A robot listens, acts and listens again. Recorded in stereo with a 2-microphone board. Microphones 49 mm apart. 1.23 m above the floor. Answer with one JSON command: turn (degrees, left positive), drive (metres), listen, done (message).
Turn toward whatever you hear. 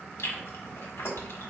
{"turn": 65}
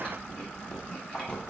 {"turn": 25}
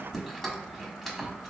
{"done": "Facing the chewing."}